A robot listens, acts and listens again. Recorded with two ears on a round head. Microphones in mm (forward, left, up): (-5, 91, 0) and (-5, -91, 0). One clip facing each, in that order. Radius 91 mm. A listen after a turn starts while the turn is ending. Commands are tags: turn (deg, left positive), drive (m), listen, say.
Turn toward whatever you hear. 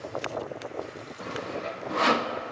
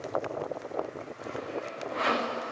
<turn deg="55"/>
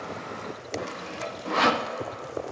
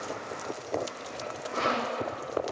<turn deg="70"/>
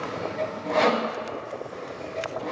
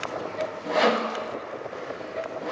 <say>Facing the sawing.</say>